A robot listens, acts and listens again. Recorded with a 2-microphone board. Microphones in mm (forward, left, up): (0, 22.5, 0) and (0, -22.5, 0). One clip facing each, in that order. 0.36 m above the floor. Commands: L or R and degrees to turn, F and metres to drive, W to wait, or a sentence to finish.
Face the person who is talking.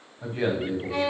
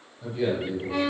L40
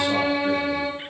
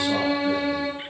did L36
W
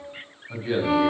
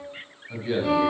L10
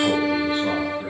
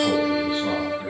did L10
W
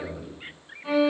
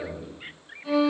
Facing the man speaking.